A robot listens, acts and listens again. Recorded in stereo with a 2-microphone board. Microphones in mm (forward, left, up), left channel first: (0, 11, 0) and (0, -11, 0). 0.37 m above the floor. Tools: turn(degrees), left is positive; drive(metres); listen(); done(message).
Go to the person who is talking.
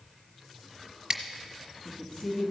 turn(degrees=55)
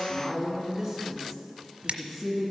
drive(metres=1.0)
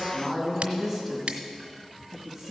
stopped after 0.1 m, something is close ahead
done("Blocked. The woman speaking is further on, straight ahead.")